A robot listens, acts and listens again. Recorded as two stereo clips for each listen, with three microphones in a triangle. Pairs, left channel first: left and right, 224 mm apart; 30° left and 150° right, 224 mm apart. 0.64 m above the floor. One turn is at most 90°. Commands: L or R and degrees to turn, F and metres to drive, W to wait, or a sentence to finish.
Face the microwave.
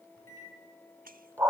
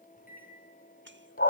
L80
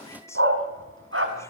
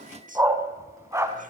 W
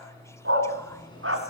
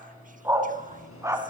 L20
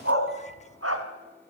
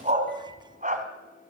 W
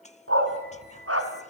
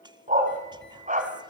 W
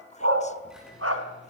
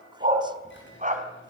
I heard a microwave from this way, but can't make it out now.